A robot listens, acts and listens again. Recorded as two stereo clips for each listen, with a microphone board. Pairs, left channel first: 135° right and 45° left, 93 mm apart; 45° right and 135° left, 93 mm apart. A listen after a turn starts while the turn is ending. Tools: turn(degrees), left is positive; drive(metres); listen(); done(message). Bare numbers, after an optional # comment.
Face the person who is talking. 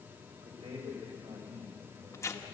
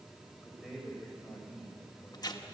# The man speaking: 40° left.
turn(40)
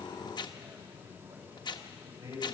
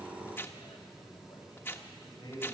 done("Facing the man speaking.")